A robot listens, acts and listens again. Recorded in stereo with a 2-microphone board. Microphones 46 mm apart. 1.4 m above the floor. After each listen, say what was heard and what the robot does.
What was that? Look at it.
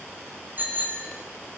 The bicycle bell: about 40° right or 140° right. Turn 40° right.
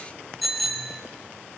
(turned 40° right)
Facing the bicycle bell.